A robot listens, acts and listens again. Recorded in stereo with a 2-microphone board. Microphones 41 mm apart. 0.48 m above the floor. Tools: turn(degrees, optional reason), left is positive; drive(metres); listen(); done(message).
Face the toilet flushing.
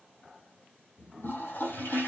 turn(degrees=60, reason="The toilet flushing: about 60° left or 120° left.")
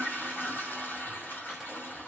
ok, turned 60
turn(degrees=55, reason="So it is at 55° left.")
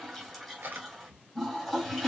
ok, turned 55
done("Found it: a toilet flushing, straight ahead, 2 to 4 m away.")